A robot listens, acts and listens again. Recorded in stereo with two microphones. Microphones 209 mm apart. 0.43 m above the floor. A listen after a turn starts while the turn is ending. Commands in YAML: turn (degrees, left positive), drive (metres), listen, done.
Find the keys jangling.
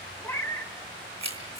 turn: -30
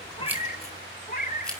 done: "Facing the keys jangling, over 4 m away."